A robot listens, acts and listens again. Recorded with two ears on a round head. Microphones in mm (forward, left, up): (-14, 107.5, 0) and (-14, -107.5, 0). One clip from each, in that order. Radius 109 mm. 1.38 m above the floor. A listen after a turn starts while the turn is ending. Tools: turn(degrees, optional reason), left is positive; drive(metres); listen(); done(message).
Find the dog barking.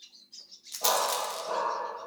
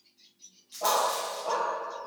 turn(degrees=-40, reason="The dog barking: about 40° right or 140° right.")
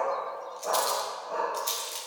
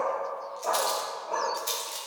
turn(degrees=-25, reason="So it is at 25° right.")
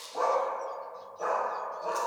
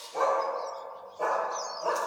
turn(degrees=-40, reason="The dog barking is now 40° right.")
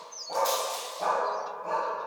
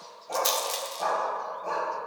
turn(degrees=-15, reason="The dog barking is now 15° right.")
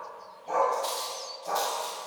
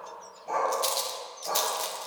done("Facing the dog barking.")